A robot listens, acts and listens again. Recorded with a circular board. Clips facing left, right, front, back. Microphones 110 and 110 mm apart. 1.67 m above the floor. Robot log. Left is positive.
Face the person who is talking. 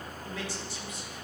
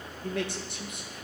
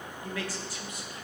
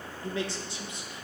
note: The man speaking: 115° right.
cmd yaw -115
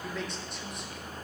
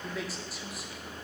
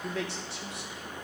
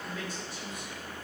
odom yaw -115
end: Found it: a man speaking, straight ahead.